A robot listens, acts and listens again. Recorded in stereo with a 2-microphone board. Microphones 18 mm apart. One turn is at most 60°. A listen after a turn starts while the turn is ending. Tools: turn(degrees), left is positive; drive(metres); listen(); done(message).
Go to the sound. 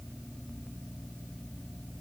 listen()
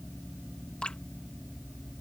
turn(degrees=60)
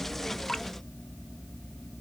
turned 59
turn(degrees=25)
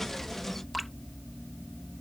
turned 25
drive(metres=1.0)
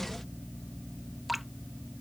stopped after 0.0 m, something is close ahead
done("Blocked. The dripping is further on, straight ahead.")